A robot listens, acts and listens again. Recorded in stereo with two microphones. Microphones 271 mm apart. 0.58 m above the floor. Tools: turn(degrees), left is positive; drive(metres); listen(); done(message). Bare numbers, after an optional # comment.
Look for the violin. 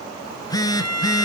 turn(-90)
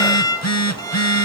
# So it is at 15° left.
turn(15)
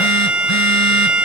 done("Found it: a violin, straight ahead, 2 to 4 m away.")